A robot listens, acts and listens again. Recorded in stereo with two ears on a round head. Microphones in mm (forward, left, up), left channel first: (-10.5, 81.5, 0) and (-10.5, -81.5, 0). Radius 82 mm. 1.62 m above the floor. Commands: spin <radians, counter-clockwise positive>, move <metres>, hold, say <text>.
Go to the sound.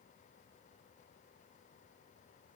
hold
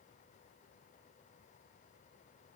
hold
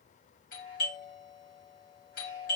spin 0.96
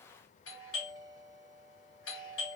spin 1.22
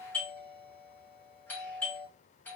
spin 0.17
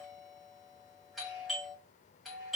move 1.0
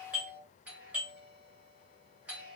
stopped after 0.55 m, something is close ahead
say Something is in my way. I am facing the doorbell but have not reached it.